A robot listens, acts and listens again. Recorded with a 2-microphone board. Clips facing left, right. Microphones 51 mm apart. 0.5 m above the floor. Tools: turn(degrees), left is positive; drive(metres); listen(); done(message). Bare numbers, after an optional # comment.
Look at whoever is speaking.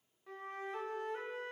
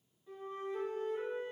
listen()
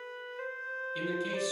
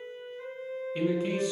# The man speaking: about 25° right or 155° right.
turn(-25)
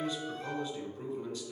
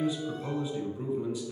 done("Found it: a man speaking, straight ahead.")